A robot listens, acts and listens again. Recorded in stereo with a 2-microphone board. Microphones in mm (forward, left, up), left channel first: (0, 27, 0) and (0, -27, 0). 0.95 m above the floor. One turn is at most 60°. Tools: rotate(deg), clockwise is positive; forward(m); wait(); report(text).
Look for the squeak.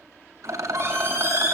rotate(50)
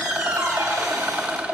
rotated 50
rotate(60)
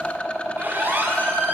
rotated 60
rotate(35)
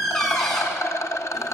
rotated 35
report("Facing the squeak, over 4 m away.")